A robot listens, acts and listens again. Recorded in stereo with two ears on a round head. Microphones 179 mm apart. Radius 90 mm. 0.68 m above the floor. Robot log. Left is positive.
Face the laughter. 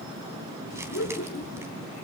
note: The laughter: about 45° left or 135° left.
cmd yaw +45
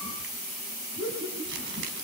note: So it is at 15° right.
cmd yaw -15
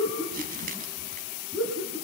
note: The laughter is now 10° right.
cmd yaw -10
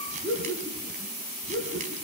end: Found it: laughter, straight ahead.